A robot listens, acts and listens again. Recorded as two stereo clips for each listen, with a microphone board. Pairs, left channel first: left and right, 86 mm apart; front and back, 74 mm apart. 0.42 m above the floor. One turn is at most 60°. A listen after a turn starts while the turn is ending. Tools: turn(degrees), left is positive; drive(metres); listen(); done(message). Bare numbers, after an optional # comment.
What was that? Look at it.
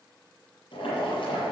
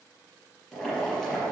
# The boiling: 80° left.
turn(60)
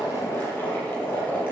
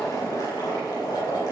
# The boiling is now 25° left.
turn(25)
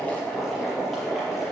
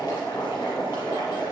done("Facing the boiling, over 4 m away.")